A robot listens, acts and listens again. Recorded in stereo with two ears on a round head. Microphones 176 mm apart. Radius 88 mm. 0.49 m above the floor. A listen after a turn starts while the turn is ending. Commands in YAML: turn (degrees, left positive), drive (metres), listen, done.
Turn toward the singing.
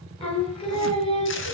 turn: 30
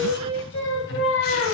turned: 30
turn: 110
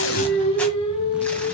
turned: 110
turn: 25
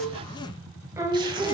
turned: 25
turn: -20
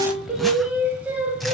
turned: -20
done: "Facing the singing, 1 to 2 m away."